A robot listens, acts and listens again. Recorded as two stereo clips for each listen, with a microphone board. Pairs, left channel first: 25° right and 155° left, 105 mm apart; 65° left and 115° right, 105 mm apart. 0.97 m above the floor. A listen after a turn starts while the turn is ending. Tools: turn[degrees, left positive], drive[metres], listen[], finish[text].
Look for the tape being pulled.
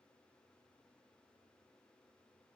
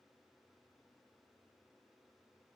Action: listen[]
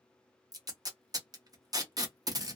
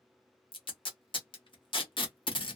Thought: The tape being pulled: 100° left.
Action: turn[100]
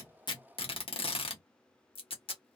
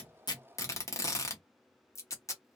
Action: finish[Facing the tape being pulled, under 1 m away.]